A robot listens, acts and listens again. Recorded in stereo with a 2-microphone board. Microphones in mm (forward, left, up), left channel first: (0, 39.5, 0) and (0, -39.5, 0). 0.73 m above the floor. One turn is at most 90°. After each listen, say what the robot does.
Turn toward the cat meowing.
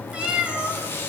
Turn 30° right.
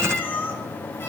Turn 25° left.
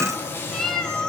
Turn 10° left.
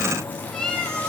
Turn 10° left.
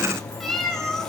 Facing the cat meowing.